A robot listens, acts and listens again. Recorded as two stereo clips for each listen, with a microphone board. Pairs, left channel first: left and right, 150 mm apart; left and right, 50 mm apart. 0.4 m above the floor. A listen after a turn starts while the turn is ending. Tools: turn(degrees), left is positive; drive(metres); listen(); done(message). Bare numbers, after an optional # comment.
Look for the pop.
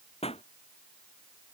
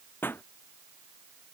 # The pop: about 40° left or 140° left.
turn(40)
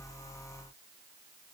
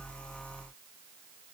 listen()
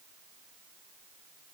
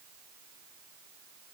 done("I heard a pop, but can't make it out now. It was about straight ahead or 100° left.")